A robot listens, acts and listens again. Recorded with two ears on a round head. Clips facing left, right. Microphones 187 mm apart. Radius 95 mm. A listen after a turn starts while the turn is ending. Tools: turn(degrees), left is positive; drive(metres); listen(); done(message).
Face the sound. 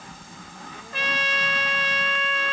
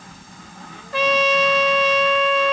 turn(degrees=-60)
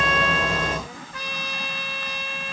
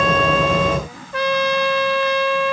turn(degrees=-55)
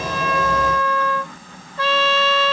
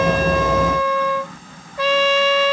turn(degrees=-15)
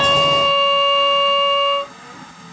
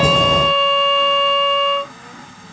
done("Facing the trumpet.")